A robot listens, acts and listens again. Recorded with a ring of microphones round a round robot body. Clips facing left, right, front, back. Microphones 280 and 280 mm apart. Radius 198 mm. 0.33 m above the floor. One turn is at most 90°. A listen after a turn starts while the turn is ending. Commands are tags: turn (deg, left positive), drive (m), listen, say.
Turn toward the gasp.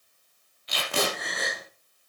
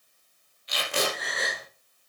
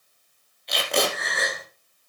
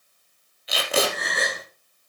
<turn deg="90"/>
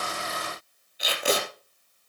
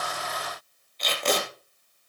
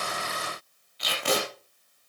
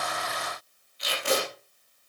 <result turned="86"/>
<turn deg="40"/>
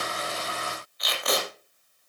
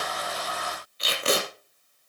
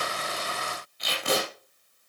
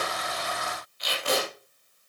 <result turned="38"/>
<say>I heard a gasp from this way, but can't make it out now.</say>